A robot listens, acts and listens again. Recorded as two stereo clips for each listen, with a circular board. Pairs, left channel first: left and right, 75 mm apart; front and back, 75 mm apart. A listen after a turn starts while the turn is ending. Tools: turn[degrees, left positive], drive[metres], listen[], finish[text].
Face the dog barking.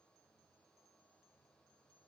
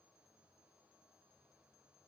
Action: listen[]
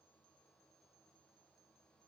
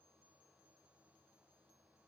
Action: listen[]
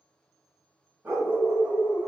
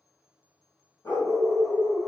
Thought: The dog barking: 30° right.
Action: turn[-30]
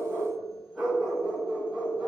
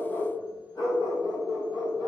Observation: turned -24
Action: finish[Facing the dog barking.]